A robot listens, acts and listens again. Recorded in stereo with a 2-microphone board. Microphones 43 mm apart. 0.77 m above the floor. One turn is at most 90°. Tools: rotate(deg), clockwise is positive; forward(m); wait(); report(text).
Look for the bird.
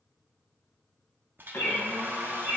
rotate(-55)
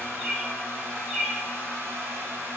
report("Found it: a bird, straight ahead.")